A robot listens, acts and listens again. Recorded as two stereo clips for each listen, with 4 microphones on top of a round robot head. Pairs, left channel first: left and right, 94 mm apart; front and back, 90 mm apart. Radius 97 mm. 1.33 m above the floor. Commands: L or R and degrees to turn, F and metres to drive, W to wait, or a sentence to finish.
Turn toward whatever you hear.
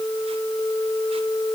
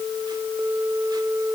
W
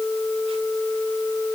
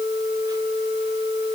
W
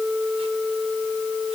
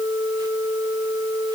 I can't make out anything.